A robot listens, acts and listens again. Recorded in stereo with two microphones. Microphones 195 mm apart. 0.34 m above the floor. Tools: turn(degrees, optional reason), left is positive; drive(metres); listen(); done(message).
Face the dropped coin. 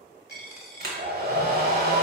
turn(degrees=-30)
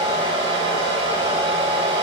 listen()
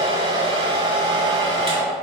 done("I heard a dropped coin, but can't make it out now. It was about 25° left or 145° right.")